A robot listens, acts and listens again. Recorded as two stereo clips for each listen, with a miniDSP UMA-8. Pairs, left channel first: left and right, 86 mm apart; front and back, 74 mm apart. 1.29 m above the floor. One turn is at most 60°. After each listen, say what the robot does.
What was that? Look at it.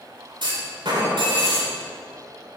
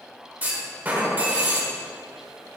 Turn 60° right.
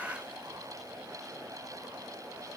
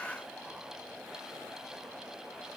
Turn 55° right.
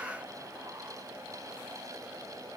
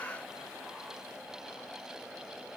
Facing where the clunk came from. I can't hear it now.